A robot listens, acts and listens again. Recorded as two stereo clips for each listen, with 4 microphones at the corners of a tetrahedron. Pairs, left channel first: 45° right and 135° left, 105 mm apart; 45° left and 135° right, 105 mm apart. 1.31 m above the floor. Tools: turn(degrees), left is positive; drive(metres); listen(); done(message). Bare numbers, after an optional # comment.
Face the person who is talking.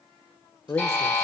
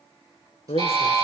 # The man speaking: 20° left.
turn(20)
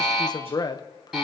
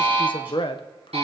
done("Facing the man speaking.")